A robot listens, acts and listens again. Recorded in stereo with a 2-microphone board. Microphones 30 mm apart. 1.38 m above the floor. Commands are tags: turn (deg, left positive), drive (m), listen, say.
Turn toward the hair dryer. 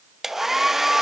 <turn deg="-30"/>
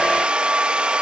<turn deg="-135"/>
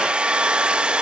<turn deg="-40"/>
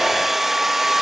<turn deg="-10"/>
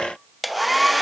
<say>Found it: a hair dryer, straight ahead.</say>